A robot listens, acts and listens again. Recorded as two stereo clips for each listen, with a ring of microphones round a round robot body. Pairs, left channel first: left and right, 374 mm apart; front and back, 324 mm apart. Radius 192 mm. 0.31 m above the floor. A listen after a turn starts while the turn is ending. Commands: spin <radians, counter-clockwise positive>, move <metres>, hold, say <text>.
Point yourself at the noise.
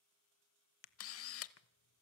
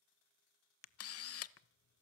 spin 0.70
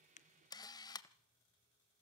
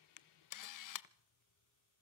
spin 0.17
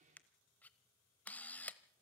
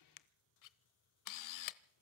say Facing the camera shutter, under 1 m away.